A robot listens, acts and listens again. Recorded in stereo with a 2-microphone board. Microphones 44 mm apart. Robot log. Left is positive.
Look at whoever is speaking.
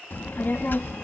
note: The child speaking: about 50° left or 130° left.
cmd yaw +50
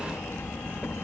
note: So it is at 80° left.
cmd yaw +80
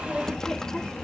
note: The child speaking is now 15° left.
cmd yaw +15
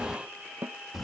end: Found it: a child speaking, straight ahead.